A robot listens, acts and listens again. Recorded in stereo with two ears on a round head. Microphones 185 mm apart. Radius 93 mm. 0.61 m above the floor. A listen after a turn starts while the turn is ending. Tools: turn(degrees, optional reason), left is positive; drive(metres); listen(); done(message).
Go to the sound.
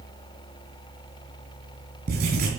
turn(degrees=-45, reason="The writing: about 45° right or 135° right.")
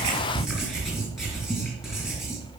drive(metres=1.0)
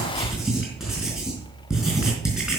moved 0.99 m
drive(metres=1.0)
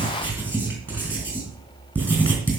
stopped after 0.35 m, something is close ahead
turn(degrees=-10, reason="The writing is now 10° right.")
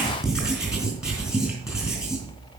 done("Something is in my way. I am facing the writing but have not reached it.")